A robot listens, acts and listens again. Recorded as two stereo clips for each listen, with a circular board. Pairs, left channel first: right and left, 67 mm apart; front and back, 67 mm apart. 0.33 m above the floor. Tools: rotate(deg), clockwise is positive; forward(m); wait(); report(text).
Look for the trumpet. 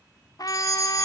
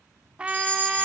rotate(105)
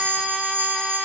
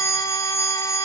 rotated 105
wait()
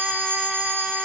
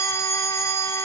wait()
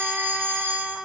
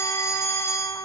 report("Found it: a trumpet, straight ahead, under 1 m away.")